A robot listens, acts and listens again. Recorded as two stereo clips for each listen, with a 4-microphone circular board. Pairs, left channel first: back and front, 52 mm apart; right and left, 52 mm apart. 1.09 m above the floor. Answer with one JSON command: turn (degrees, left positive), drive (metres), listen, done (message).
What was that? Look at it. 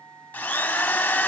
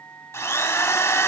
{"turn": -120}
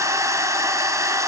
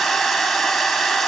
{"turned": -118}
{"done": "Facing the drill."}